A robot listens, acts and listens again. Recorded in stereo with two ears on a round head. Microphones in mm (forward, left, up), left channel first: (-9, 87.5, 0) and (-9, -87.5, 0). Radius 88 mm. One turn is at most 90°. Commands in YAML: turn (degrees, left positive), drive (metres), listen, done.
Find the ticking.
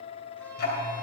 turn: 55
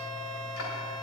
turn: 70
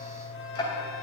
turn: 20
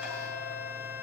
listen: true
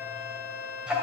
done: "Facing the ticking, 2 to 4 m away."